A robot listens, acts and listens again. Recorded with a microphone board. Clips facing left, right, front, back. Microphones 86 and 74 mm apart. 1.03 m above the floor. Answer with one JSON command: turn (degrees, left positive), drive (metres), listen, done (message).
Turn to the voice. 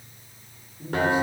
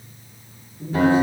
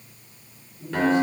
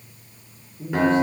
{"turn": 160}
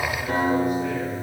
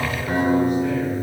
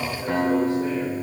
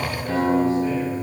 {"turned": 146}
{"turn": 15}
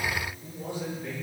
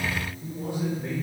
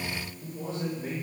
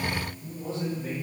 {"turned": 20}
{"turn": -20}
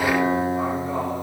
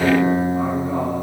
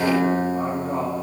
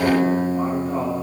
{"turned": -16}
{"listen": true}
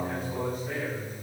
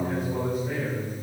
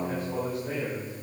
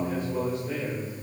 {"done": "Found it: a man speaking, straight ahead, over 4 m away."}